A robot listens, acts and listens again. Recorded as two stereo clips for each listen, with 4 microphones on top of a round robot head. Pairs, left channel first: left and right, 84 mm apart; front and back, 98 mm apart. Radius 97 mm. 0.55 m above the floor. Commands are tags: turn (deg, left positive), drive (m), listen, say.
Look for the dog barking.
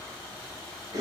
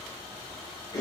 <listen/>
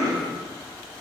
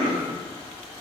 <listen/>
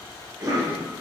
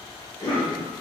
<say>I can't make out a dog barking, only a cough.</say>